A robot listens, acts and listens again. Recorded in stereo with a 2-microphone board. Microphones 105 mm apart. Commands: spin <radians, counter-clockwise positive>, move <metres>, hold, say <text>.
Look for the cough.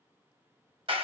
hold
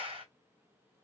hold
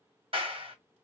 say I can't make out a cough to turn to.